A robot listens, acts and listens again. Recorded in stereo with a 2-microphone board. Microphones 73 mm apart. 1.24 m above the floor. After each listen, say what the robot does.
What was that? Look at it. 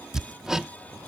Turn 30° right.
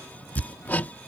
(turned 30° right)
Turn 25° left.
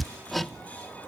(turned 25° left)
Found it: hammering, straight ahead.